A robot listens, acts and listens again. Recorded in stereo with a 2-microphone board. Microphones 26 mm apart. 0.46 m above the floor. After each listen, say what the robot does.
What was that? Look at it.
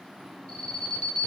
Turn 35° left.
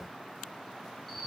Found it: an alarm, straight ahead, 2 to 4 m away.